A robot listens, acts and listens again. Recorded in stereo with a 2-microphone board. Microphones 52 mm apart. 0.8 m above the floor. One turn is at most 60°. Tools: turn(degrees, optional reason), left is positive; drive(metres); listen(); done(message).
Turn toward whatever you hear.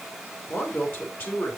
turn(degrees=40, reason="The man speaking: about 40° left or 140° left.")
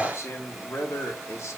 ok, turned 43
turn(degrees=60, reason="So it is at 110° left.")
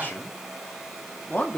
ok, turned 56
turn(degrees=30, reason="The man speaking is now 30° left.")
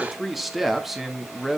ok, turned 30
done("Found it: a man speaking, straight ahead.")